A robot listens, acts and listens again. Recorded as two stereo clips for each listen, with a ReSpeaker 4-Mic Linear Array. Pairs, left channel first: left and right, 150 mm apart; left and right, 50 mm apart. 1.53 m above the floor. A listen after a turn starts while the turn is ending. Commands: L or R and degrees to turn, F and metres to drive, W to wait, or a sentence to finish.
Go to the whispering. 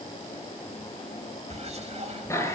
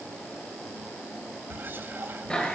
R45
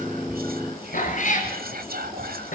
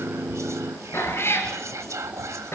R90
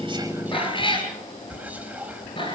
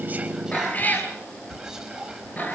R10
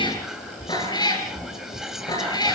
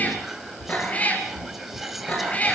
F1.0
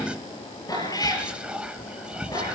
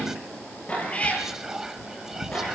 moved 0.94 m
F1.0
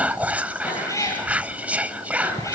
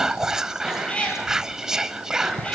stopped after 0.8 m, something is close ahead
R10
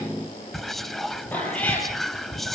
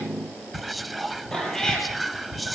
I am next to the whispering.